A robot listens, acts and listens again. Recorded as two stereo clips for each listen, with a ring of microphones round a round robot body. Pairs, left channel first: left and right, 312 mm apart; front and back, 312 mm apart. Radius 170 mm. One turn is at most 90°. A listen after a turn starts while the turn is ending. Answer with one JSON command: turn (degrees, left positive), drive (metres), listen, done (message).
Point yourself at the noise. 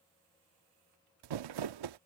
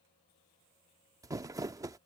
{"turn": -90}
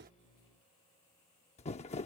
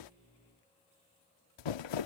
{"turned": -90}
{"turn": 15}
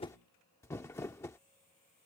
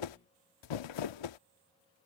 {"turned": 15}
{"done": "Found it: crumpling, straight ahead."}